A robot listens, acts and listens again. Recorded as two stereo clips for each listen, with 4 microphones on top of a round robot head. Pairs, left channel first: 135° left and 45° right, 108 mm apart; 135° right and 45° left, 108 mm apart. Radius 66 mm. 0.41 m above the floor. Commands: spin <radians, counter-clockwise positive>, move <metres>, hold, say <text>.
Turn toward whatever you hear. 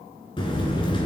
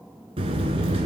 spin 1.57
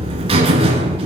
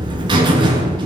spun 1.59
say Found it: a buzzer, straight ahead, 1 to 2 m away.